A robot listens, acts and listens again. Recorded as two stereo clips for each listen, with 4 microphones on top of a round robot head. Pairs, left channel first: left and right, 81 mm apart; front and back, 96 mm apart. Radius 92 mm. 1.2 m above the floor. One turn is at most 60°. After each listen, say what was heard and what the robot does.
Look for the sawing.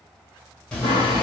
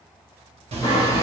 The sawing: 45° left. Turn 45° left.
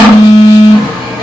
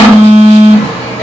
Facing the sawing, 1 to 2 m away.